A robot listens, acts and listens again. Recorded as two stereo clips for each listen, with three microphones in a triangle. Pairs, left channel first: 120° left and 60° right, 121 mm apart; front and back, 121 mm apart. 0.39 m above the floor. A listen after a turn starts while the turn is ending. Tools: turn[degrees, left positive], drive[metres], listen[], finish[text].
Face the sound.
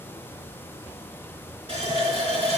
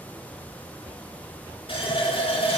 Thought: The running tap: 35° right.
Action: turn[-35]
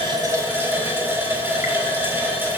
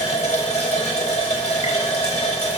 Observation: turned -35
Thought: The running tap is now 10° left.
Action: turn[10]
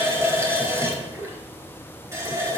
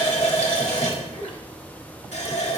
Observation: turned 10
Action: finish[Facing the running tap, 1 to 2 m away.]